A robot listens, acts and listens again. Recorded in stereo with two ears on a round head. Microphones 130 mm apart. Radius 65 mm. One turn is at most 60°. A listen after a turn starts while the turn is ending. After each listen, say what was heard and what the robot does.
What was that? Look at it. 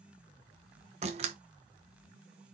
The door slam: about 45° right or 135° right. Turn 45° right.
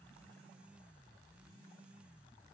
Keep listening.
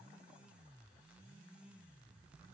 I heard a door slam, but can't make it out now. It was about straight ahead or 90° right.